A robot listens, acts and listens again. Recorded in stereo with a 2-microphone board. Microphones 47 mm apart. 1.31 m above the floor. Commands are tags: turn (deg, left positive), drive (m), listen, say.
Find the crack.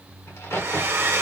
<turn deg="65"/>
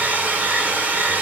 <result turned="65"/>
<listen/>
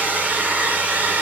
<say>I heard a crack, but can't make it out now. It was about straight ahead or 50° left.</say>